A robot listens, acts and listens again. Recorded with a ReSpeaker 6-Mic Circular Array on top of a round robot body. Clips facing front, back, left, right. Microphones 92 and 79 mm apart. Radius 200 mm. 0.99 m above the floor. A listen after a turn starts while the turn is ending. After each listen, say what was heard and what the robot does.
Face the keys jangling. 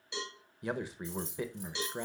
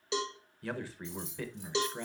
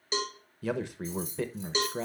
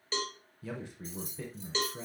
The keys jangling: 45° right. Turn 45° right.
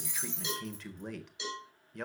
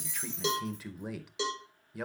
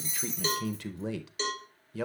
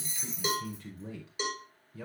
Keep listening.
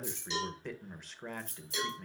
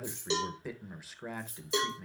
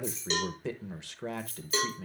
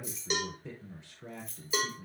Facing the keys jangling, 2 to 4 m away.